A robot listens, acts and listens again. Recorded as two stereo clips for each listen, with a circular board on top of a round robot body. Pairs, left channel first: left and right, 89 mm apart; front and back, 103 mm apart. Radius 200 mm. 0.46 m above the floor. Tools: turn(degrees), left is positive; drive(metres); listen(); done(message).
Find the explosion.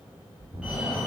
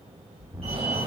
turn(degrees=-115)
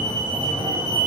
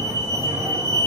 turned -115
done("I heard an explosion from this way, but can't make it out now.")